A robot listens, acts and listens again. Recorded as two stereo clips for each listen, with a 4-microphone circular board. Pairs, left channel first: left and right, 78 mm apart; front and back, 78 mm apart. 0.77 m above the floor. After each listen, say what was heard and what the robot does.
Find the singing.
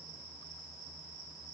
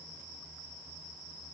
Keep listening.
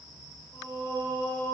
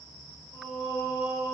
The singing: 95° left. Turn 95° left.
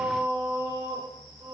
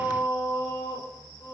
The singing is now 35° right. Turn 35° right.
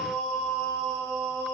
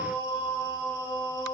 Found it: singing, straight ahead.